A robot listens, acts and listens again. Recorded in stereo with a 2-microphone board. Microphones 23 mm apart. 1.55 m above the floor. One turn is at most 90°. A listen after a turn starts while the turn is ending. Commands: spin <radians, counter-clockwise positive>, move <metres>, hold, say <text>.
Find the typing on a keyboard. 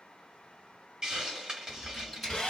spin 0.52
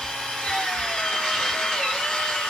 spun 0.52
hold
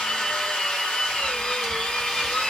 hold
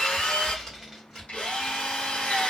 spin 1.57
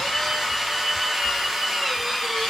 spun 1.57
spin 1.05
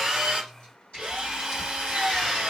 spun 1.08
hold
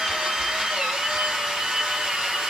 say I heard typing on a keyboard from this way, but can't make it out now.